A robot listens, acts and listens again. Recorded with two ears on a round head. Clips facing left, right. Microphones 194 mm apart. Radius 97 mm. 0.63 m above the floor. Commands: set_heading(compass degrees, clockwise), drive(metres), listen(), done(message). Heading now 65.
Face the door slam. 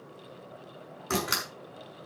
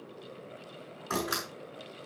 set_heading(35)
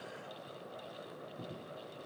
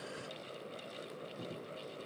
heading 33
listen()
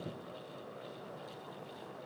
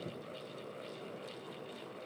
done("I heard a door slam, but can't make it out now. It was about straight ahead or 115° left.")